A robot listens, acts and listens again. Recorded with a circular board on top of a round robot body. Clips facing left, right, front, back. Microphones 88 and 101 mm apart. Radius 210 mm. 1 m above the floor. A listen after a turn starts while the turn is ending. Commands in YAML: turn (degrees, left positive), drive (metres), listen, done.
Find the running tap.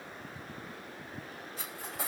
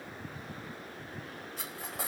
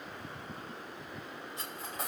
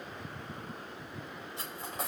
listen: true
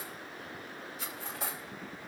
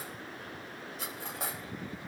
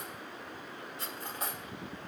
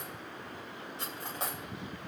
listen: true
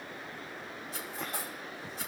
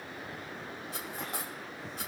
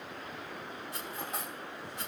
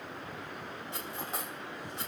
done: "I can't make out a running tap to turn to."